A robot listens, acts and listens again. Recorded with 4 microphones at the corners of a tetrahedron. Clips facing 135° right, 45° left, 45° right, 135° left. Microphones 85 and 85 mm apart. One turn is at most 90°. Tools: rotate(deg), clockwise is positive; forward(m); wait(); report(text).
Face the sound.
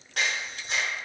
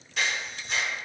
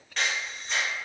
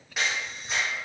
rotate(90)
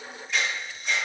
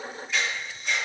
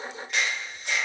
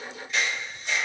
rotate(45)
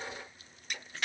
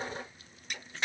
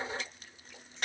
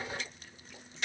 rotate(15)
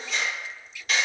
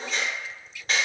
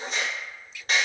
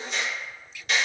report("Found it: a camera shutter, straight ahead.")